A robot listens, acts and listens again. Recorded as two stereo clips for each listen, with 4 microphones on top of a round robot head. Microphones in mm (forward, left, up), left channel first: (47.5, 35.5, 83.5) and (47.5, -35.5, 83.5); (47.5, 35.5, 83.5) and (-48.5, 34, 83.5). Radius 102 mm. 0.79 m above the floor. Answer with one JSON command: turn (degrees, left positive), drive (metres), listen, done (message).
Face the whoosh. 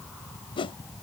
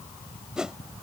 {"turn": 100}
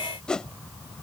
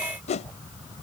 {"turn": 10}
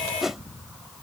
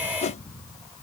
{"done": "Facing the whoosh."}